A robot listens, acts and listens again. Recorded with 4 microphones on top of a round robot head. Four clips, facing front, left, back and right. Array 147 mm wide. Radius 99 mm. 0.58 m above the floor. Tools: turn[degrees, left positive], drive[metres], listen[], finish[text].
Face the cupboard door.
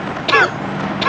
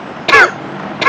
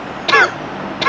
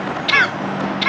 Action: listen[]
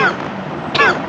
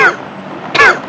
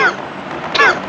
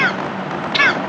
Action: listen[]
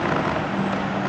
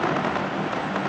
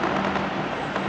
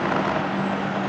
Action: finish[I can't make out a cupboard door, only a cough.]